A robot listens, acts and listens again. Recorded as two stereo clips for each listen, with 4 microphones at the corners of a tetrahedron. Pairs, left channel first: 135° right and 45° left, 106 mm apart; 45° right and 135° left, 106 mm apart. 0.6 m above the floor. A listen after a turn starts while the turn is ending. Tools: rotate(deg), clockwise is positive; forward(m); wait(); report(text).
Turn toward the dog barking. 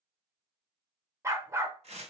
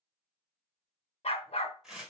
rotate(20)
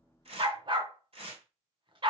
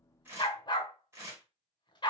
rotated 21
report("Found it: a dog barking, straight ahead, under 1 m away.")